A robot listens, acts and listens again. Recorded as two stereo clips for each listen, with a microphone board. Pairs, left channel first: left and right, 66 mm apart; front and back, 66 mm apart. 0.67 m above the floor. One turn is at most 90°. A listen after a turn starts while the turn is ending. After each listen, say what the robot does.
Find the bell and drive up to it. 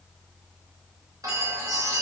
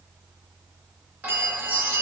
Turn 90° left.
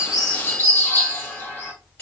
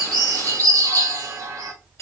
Turn 35° left.
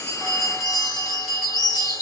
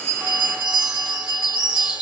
Drive 1.0 m forward.
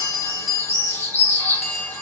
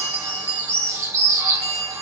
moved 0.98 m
Drive 1.0 m forward.
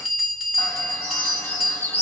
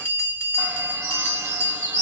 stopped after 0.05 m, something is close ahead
I am next to the bell.